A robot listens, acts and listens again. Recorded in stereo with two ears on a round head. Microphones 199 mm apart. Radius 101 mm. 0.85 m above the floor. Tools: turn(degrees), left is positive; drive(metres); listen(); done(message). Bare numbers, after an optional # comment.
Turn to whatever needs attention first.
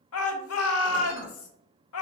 # The shout: about 70° left or 110° left.
turn(70)
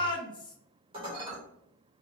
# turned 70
# So it is at 20° left.
turn(20)
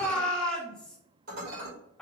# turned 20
done("Found it: a shout, straight ahead.")